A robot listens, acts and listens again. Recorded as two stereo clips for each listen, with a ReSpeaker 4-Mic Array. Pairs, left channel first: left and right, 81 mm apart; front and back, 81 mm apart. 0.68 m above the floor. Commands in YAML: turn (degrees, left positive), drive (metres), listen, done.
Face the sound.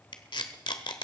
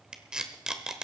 turn: 100
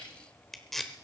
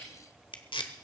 done: "Found it: tape being pulled, straight ahead."